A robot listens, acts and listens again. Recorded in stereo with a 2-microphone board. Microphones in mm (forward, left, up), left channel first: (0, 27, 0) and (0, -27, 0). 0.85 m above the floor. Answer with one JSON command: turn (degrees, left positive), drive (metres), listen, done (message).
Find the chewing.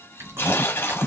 {"turn": -55}
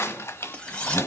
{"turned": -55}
{"done": "Found it: chewing, straight ahead."}